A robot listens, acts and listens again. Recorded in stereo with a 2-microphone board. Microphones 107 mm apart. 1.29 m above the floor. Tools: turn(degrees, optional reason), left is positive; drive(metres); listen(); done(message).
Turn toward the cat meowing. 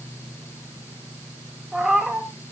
turn(degrees=-30)
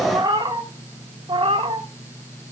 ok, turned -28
turn(degrees=-120, reason="So it is at 120° right.")
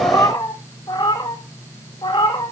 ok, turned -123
turn(degrees=50, reason="The cat meowing is now 50° left.")
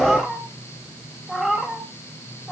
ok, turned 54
done("Found it: a cat meowing, straight ahead, 2 to 4 m away.")